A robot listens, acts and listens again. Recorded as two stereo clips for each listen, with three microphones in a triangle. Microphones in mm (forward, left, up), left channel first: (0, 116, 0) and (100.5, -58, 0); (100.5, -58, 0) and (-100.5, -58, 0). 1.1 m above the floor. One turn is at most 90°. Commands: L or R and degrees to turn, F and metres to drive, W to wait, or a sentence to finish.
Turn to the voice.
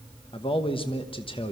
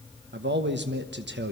L90
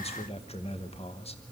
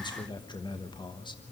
L65
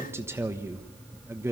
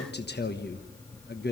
L15
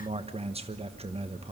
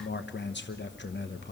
Facing the man speaking.